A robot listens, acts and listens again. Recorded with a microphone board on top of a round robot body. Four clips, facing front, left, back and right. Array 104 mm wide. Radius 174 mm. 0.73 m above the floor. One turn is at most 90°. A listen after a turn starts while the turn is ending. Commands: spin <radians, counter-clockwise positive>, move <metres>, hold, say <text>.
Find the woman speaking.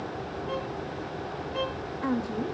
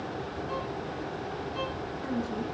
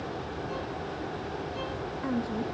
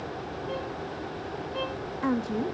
spin -1.22
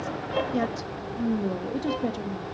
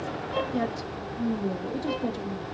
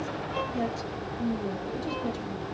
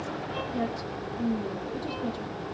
spin 0.26
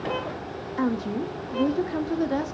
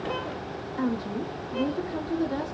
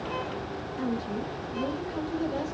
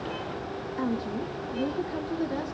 say Found it: a woman speaking, straight ahead, 1 to 2 m away.